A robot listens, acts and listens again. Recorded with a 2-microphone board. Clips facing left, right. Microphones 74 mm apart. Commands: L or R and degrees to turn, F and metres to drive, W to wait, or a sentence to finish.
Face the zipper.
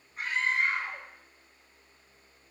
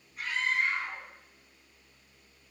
W
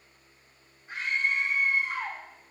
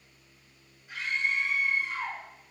W
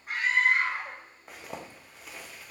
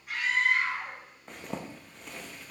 L30
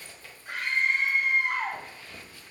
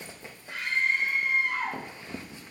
R25
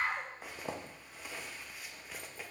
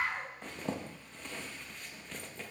L10
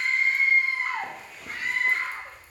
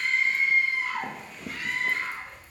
Facing the zipper.